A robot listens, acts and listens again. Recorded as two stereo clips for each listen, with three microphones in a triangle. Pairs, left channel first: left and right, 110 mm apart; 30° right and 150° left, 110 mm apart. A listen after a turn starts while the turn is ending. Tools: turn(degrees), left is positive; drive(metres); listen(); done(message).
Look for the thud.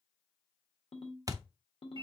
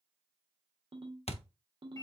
turn(degrees=-35)
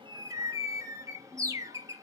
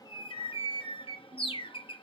done("I heard a thud from this way, but can't make it out now.")